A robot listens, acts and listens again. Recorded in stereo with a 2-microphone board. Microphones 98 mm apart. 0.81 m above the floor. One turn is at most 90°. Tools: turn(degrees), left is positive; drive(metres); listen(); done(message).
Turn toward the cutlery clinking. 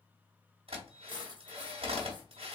turn(degrees=-50)
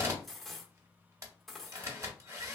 done("Found it: cutlery clinking, straight ahead, under 1 m away.")